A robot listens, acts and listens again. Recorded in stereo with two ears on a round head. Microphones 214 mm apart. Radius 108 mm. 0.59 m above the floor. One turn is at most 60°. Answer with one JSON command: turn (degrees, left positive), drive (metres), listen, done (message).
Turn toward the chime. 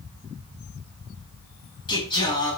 {"listen": true}
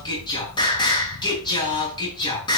{"listen": true}
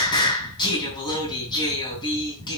{"done": "I can't make out a chime, only singing."}